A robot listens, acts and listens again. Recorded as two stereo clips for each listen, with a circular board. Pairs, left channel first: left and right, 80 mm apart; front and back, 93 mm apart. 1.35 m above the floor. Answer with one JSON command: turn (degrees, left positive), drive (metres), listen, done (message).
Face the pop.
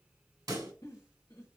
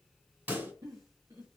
{"turn": -115}
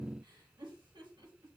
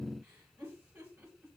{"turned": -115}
{"done": "I heard a pop from this way, but can't make it out now."}